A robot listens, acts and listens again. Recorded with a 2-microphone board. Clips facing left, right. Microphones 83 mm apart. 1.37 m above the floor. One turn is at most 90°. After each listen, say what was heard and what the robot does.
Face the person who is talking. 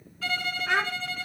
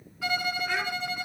The child speaking: about 65° left or 115° left. Turn 65° left.
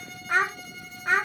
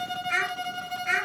So it is at 50° left. Turn 50° left.
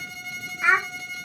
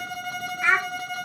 The child speaking is now 10° left. Turn 10° left.
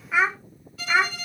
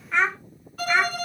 Facing the child speaking.